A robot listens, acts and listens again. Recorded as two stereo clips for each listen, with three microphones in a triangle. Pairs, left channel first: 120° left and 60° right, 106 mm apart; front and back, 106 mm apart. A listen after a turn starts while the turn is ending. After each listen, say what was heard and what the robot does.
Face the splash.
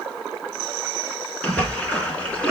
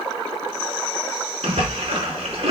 The splash: 160° right. Turn 160° right.
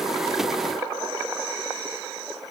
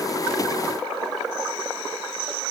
I heard a splash from this way, but can't make it out now.